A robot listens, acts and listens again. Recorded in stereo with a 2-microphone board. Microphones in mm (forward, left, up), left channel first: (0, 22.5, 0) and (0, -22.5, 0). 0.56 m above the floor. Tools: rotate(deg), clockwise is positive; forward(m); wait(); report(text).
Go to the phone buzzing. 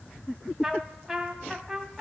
wait()
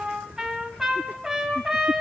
wait()
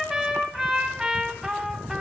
report("I can't make out a phone buzzing to turn to.")